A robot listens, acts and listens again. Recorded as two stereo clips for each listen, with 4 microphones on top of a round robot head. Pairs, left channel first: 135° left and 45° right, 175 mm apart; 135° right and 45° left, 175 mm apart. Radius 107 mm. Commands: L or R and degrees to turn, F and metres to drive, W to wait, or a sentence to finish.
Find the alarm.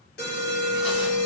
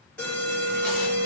L145
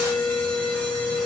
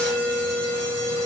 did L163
R20
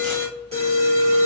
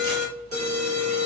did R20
Facing the alarm.